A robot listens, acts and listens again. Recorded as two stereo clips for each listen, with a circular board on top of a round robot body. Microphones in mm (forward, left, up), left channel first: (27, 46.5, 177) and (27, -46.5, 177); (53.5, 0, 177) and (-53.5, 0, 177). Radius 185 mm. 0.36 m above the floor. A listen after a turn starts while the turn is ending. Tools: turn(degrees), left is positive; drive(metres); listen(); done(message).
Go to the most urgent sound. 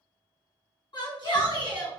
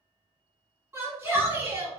turn(degrees=110)
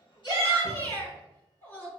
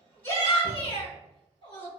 turn(degrees=15)
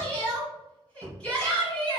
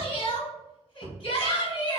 turn(degrees=10)
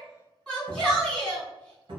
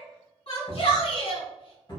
drive(metres=1.0)
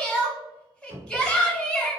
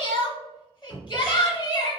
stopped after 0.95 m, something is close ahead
done("Arrived at the shout, straight ahead.")